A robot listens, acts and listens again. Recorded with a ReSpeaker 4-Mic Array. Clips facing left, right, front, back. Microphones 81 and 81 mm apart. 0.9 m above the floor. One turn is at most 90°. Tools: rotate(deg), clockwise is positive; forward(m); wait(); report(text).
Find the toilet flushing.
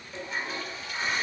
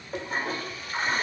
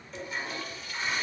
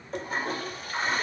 rotate(90)
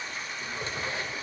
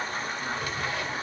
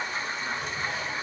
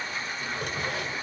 rotate(60)
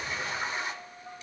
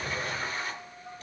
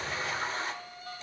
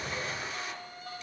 rotate(-20)
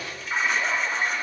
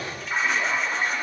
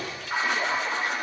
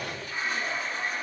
report("Found it: a toilet flushing, straight ahead.")